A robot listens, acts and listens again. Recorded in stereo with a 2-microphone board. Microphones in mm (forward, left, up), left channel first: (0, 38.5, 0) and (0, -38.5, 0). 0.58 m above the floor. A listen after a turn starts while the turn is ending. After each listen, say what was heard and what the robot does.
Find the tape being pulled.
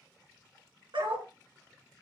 Keep listening.
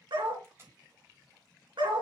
The tape being pulled: about 35° right or 145° right. Turn 35° right.
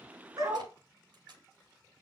So it is at 105° right. Turn 105° right.
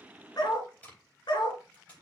The tape being pulled is now 20° left. Turn 20° left.
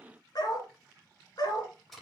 Found it: tape being pulled, straight ahead, over 4 m away.